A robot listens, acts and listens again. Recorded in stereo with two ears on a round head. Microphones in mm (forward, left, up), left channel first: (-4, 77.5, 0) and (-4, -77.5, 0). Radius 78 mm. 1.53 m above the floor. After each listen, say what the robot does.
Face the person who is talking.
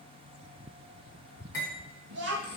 Turn 70° right.
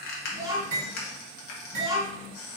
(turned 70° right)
Turn 20° right.
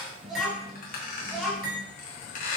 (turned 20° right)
Facing the child speaking, 1 to 2 m away.